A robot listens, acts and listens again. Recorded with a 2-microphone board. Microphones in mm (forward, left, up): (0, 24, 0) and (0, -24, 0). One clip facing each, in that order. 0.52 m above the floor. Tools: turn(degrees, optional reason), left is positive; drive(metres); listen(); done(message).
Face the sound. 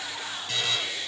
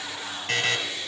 turn(degrees=-55, reason="The buzzer: about 55° right or 125° right.")
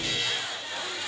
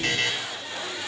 turn(degrees=-70, reason="So it is at 70° right.")
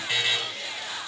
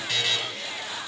turn(degrees=20, reason="The buzzer is now 20° left.")
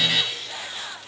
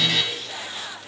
done("Found it: a buzzer, straight ahead, 1 to 2 m away.")